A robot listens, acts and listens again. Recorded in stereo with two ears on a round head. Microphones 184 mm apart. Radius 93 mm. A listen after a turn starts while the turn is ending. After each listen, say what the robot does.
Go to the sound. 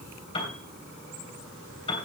Turn 25° left.
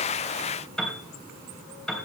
Drive 1.0 m forward.
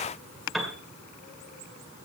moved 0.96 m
Drive 1.0 m forward.
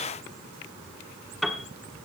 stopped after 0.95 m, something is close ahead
I am next to the piano.